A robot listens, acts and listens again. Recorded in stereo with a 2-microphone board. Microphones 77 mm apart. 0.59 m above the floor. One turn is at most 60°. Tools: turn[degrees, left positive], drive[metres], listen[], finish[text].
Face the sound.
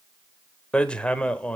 Action: turn[30]
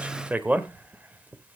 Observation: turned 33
Thought: So it is at 20° right.
Action: turn[-20]
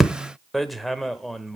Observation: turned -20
Action: finish[Facing the hammering, 1 to 2 m away.]